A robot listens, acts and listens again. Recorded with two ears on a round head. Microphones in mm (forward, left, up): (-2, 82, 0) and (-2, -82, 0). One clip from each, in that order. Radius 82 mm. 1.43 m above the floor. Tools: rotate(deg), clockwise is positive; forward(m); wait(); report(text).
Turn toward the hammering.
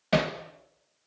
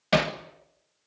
rotate(30)
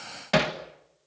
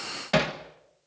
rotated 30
report("Found it: hammering, straight ahead, 1 to 2 m away.")